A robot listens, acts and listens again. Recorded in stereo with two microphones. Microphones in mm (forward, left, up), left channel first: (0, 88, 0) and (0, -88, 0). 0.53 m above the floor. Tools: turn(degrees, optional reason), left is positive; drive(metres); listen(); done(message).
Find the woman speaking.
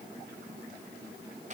listen()
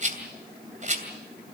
listen()
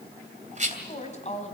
turn(degrees=40, reason="The woman speaking: about 40° left or 140° left.")
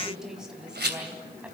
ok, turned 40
turn(degrees=-10, reason="So it is at 10° right.")
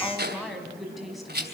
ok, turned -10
done("Facing the woman speaking.")